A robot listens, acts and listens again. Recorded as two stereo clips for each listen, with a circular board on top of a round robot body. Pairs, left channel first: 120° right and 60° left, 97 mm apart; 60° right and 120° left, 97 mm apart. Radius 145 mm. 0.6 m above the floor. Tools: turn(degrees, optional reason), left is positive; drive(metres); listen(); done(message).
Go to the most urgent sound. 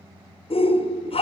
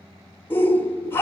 turn(degrees=-130, reason="The shout: 130° right.")
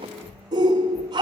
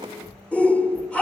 turn(degrees=15, reason="The shout is now 15° left.")
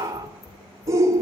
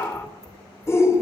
drive(metres=1.0)
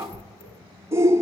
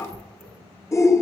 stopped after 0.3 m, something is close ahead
done("Blocked. The shout is further on, straight ahead.")